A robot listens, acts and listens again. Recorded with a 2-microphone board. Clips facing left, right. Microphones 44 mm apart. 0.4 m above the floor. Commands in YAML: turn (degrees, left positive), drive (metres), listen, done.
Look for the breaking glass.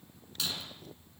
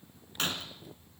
turn: -50
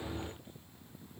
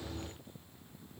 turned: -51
listen: true
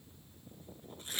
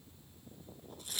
done: "I heard breaking glass, but can't make it out now. It was about straight ahead or 80° right."